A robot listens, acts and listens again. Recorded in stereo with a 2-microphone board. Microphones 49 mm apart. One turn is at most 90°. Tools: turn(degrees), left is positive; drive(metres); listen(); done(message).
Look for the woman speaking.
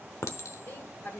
turn(degrees=50)
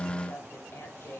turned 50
turn(degrees=50)
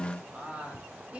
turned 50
turn(degrees=-20)
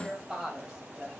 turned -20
turn(degrees=-15)
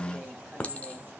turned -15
listen()
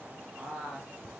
done("Found it: a woman speaking, straight ahead.")